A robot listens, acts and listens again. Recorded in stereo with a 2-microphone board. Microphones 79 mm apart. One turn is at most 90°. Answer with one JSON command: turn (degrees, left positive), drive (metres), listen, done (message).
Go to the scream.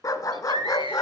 {"turn": -65}
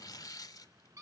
{"turn": -45}
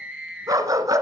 {"turn": -10}
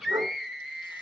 {"drive": 1.0}
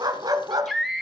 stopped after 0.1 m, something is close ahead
{"done": "Something is in my way. I am facing the scream but have not reached it."}